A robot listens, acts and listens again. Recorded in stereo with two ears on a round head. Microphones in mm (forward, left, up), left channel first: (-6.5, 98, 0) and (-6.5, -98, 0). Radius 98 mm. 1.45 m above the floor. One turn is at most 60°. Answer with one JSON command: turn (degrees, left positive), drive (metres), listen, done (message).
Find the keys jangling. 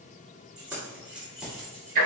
{"turn": -30}
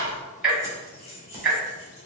{"turn": 30}
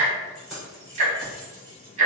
{"done": "Found it: keys jangling, straight ahead, 2 to 4 m away."}